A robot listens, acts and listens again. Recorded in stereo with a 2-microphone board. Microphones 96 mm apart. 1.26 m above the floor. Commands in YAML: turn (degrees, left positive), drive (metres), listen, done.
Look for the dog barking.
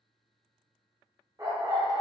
turn: -35
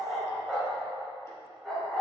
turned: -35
done: "Found it: a dog barking, straight ahead, 2 to 4 m away."